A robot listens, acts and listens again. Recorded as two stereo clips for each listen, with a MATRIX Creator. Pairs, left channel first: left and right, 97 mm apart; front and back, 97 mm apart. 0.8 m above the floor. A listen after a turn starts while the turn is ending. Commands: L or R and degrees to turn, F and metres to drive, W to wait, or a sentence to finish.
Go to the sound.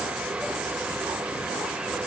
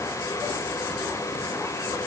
W
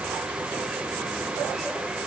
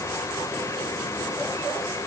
W
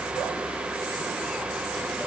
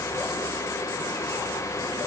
I can't make out anything.